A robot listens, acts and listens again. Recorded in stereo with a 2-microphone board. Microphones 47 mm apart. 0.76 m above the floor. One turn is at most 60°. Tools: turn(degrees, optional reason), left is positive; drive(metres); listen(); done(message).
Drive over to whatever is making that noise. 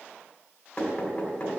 turn(degrees=25, reason="The knocking: about 25° left or 155° left.")
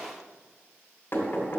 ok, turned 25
turn(degrees=60, reason="So it is at 130° left.")
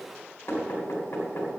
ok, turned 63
turn(degrees=60, reason="The knocking is now 70° left.")
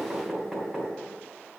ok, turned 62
drive(metres=1.0)
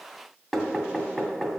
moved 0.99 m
drive(metres=1.0)
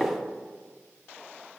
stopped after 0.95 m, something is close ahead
turn(degrees=15, reason="The knocking is now 15° left.")
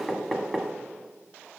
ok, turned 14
done("I am next to the knocking.")